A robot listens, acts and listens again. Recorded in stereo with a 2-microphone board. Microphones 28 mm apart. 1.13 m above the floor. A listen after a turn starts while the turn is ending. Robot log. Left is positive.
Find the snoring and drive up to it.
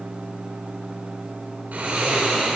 cmd yaw -90
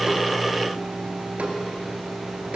cmd idle
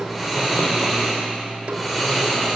cmd fwd 1.0
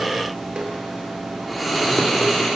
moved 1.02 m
cmd fwd 1.0
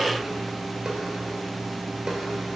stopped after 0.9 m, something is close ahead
cmd idle
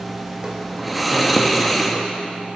end: I am next to the snoring.